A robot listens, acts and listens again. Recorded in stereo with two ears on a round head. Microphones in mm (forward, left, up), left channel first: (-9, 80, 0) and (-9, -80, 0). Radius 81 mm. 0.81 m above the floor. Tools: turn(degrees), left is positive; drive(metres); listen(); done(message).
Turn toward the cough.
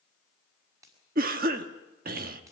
turn(degrees=-55)
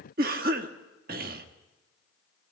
turn(degrees=-60)
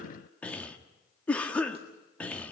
turn(degrees=10)
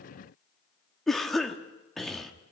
done("Facing the cough, 1 to 2 m away.")